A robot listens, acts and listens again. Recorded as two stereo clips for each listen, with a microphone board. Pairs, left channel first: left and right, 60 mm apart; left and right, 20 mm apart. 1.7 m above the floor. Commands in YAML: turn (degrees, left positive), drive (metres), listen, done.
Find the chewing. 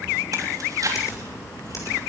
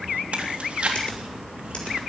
turn: -90
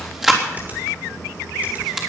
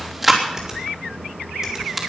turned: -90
turn: -10
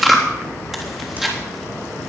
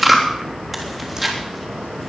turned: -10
done: "Facing the chewing."